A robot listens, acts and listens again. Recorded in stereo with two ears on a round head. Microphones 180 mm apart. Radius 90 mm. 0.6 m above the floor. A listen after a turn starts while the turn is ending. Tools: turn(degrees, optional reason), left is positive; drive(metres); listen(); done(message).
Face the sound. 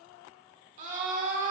turn(degrees=-40, reason="The scream: about 40° right or 140° right.")
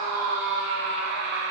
turn(degrees=-90, reason="So it is at 90° right.")
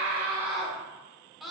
done("Found it: a scream, straight ahead.")